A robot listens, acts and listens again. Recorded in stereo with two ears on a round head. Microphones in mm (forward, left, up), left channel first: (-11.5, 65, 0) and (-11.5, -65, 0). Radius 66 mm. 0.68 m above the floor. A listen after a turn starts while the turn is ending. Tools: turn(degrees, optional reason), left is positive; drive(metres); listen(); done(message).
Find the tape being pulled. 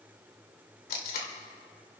turn(degrees=70, reason="The tape being pulled: about 70° left or 110° left.")
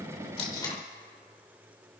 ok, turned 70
turn(degrees=25, reason="So it is at 25° left.")
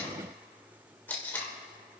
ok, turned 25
turn(degrees=15, reason="The tape being pulled is now 15° left.")
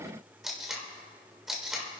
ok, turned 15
done("Found it: tape being pulled, straight ahead, 2 to 4 m away.")